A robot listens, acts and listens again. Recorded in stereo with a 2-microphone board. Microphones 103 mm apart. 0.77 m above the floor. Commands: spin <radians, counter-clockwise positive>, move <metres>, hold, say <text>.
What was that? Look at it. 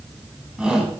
spin -0.52
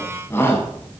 spin 0.35
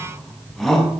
say Facing the shout.